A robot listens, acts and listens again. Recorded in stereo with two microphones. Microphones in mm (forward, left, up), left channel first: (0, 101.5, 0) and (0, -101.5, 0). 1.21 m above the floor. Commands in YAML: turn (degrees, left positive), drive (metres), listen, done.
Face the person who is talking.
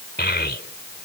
turn: 55
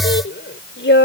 turn: 70
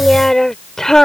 done: "Facing the child speaking."